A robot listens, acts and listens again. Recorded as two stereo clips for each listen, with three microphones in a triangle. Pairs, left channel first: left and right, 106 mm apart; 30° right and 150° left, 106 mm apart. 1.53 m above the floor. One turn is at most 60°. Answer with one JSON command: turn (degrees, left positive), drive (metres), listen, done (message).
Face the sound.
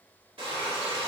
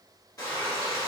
{"turn": -60}
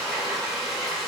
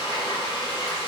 {"done": "Facing the frying, 1 to 2 m away."}